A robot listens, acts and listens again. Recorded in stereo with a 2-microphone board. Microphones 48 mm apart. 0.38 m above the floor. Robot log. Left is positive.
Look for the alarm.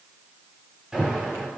cmd yaw -30
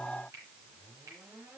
cmd idle
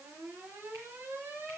note: So it is at 135° right.
cmd yaw -135
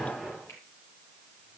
note: The alarm is now 10° left.
cmd yaw +10
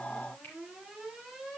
end: Found it: an alarm, straight ahead.